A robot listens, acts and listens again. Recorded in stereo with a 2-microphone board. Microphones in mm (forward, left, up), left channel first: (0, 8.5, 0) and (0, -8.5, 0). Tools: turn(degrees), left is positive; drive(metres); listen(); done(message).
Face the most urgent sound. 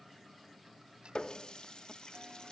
listen()
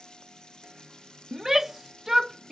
turn(degrees=-25)
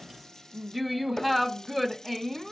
done("Facing the shout.")